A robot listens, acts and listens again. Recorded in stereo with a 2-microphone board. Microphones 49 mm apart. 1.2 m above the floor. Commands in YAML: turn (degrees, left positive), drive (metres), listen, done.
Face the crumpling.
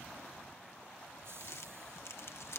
turn: 60
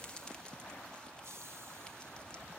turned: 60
listen: true
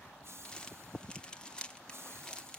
turn: 20
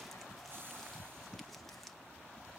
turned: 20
listen: true
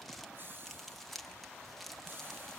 done: "Facing the crumpling."